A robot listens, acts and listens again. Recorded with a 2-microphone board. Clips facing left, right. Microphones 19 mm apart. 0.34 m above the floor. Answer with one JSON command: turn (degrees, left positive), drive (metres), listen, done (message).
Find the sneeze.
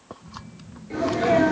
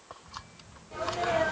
{"turn": 70}
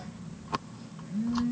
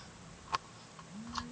{"listen": true}
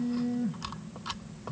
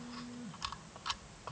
{"done": "I heard a sneeze, but can't make it out now. It was about straight ahead or 40° left."}